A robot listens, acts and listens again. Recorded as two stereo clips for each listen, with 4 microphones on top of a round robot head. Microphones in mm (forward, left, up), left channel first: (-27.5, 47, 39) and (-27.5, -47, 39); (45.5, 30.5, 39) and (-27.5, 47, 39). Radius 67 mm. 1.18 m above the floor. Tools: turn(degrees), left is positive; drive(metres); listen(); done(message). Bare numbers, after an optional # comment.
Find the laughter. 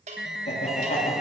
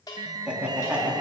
# The laughter: 90° left.
turn(90)
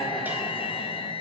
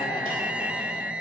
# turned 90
done("Facing the laughter, 2 to 4 m away.")